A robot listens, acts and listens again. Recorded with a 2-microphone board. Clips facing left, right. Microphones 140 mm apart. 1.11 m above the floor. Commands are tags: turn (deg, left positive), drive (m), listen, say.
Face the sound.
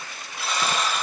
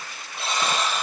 <turn deg="-25"/>
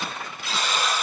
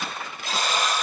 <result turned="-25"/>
<turn deg="-130"/>
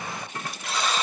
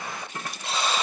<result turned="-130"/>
<turn deg="-30"/>
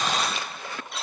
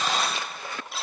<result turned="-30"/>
<say>Facing the buzzer, 2 to 4 m away.</say>